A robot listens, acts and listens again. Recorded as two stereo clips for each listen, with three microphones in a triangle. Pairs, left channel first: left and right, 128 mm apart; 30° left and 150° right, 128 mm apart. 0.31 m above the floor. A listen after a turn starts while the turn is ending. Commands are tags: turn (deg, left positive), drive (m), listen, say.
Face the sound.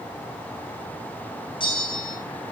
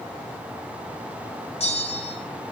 <turn deg="50"/>
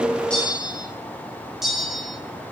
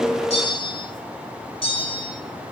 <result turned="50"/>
<say>Facing the bell.</say>